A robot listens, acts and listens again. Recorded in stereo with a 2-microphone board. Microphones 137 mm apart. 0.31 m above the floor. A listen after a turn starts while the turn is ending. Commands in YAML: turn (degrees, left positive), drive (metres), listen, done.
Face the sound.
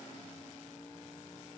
listen: true
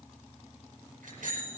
turn: -90
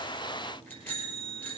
turn: 15
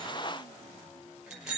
done: "Facing the bicycle bell."